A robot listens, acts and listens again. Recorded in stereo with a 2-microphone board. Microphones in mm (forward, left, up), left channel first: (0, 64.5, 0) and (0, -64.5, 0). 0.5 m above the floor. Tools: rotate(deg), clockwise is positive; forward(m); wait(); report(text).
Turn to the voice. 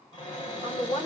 rotate(-65)
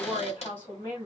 rotate(-40)
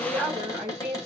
report("Found it: a woman speaking, straight ahead, 2 to 4 m away.")